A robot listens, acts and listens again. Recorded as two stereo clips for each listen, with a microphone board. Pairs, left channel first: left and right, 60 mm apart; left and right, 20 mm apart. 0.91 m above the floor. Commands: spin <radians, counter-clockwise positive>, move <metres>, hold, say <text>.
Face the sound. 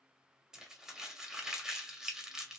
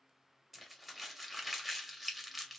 spin -0.52
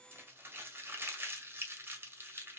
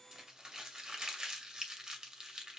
spin -2.44
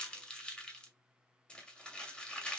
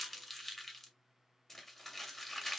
spin 0.35
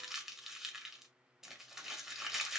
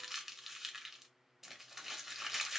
say Found it: crumpling, straight ahead, 1 to 2 m away.